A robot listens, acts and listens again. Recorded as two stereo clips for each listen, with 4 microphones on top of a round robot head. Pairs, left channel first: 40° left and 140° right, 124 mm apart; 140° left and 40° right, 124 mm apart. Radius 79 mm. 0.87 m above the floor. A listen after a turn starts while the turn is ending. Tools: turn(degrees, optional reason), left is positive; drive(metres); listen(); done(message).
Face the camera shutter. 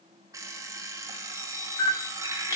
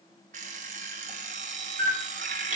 turn(degrees=-20, reason="The camera shutter: 20° right.")
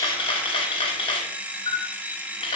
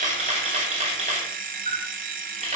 turn(degrees=-10, reason="The camera shutter is now 10° right.")
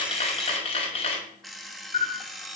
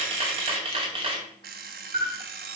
done("Facing the camera shutter.")